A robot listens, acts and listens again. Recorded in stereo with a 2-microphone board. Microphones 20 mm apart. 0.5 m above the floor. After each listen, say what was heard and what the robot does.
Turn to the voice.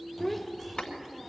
Turn 30° left.
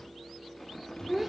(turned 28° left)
So it is at 20° right. Turn 20° right.
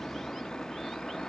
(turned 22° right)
Keep listening.
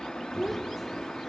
Found it: a child speaking, straight ahead.